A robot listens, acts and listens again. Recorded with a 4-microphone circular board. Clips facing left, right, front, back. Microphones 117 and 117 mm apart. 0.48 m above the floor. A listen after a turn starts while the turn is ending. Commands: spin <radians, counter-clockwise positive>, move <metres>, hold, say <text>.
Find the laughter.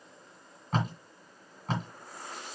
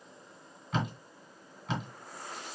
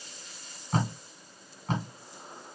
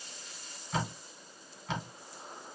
hold
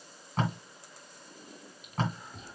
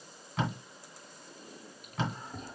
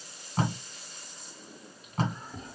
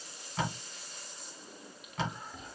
spin -0.79
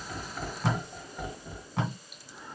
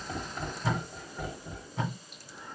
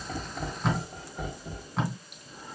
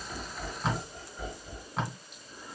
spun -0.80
spin 0.17
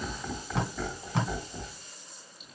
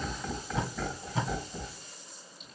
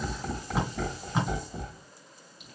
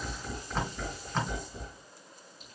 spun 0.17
say Found it: laughter, straight ahead, 2 to 4 m away.